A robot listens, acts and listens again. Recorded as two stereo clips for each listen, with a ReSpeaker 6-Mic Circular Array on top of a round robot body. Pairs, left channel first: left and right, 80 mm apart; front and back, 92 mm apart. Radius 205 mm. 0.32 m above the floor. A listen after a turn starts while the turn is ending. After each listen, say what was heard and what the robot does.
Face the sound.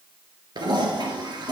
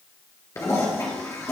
The toilet flushing: 60° right. Turn 60° right.
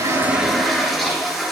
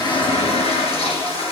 Found it: a toilet flushing, straight ahead, 2 to 4 m away.